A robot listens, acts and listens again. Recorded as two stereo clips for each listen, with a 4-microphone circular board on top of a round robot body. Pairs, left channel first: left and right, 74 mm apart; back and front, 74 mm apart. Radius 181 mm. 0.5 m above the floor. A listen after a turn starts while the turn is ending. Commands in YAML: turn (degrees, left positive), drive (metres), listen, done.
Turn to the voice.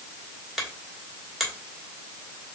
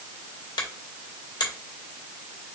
listen: true
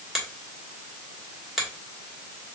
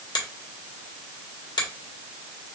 listen: true
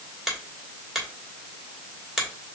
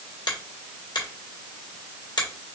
done: "I can't make out anyone speaking, only a finger snap."